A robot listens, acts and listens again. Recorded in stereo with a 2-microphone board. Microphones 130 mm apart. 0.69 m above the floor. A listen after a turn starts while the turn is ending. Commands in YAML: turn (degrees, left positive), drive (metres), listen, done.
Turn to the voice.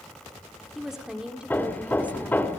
turn: -30
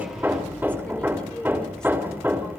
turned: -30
done: "Facing the woman speaking."